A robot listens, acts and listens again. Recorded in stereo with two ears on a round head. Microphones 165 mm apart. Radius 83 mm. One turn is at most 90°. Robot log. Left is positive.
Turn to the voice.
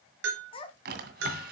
note: The child speaking: about 35° left or 145° left.
cmd yaw +35
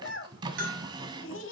note: So it is at 95° left.
cmd yaw +90
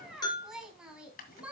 end: Found it: a child speaking, straight ahead.